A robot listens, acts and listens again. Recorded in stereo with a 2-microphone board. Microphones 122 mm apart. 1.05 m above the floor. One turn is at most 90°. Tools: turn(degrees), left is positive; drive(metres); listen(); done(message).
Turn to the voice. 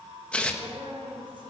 turn(degrees=-45)
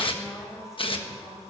done("Facing the woman speaking.")